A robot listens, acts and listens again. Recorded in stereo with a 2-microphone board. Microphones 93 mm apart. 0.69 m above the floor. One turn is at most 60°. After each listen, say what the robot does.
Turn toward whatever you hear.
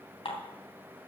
Turn 60° left.
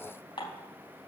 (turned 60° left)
Turn 60° left.
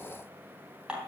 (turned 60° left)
Turn 10° right.
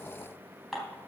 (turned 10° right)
Facing the dishes clattering.